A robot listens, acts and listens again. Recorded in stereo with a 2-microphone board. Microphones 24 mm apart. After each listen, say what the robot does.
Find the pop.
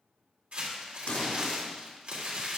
Turn 70° left.
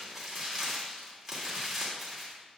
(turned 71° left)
Keep listening.
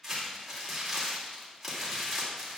I heard a pop, but can't make it out now. It was about straight ahead or 40° left.